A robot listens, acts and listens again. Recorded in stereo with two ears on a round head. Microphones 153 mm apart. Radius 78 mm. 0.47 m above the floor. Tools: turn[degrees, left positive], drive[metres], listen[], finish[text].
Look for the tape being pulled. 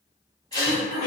Thought: The tape being pulled: about 20° left or 160° left.
Action: turn[20]
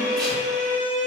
Action: listen[]
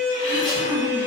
Action: listen[]
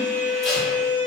Action: finish[I heard tape being pulled, but can't make it out now. It was about straight ahead or 140° left.]